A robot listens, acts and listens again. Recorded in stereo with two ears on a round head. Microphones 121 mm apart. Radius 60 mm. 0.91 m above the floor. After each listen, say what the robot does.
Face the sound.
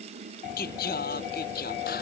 Turn 90° left.
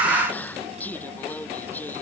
Turn 15° left.
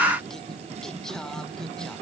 Keep listening.
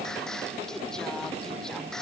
Keep listening.
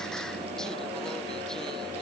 I heard singing from this way, but can't make it out now.